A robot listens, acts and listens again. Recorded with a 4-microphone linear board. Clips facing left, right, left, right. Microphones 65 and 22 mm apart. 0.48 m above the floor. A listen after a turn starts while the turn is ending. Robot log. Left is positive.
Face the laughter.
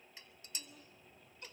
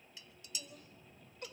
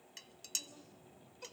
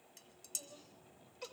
note: The laughter: about 60° right or 120° right.
cmd yaw -60
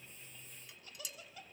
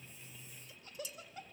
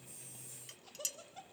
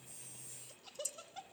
note: So it is at 35° right.
cmd yaw -35
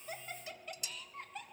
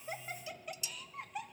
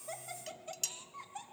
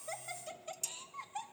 note: The laughter is now 10° right.
cmd yaw -10
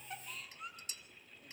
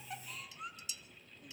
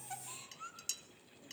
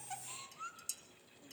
end: Facing the laughter.